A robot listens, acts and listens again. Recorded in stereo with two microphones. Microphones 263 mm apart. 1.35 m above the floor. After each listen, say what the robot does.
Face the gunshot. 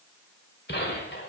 Turn 40° left.
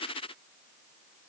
Keep listening.
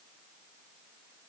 I heard a gunshot, but can't make it out now. It was about straight ahead or 100° left.